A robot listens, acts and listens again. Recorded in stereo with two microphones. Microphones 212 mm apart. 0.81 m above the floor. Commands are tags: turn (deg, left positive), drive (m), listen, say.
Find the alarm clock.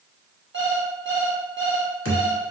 <turn deg="-60"/>
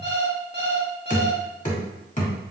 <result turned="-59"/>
<turn deg="-55"/>
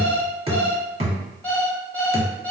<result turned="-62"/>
<say>Found it: an alarm clock, straight ahead.</say>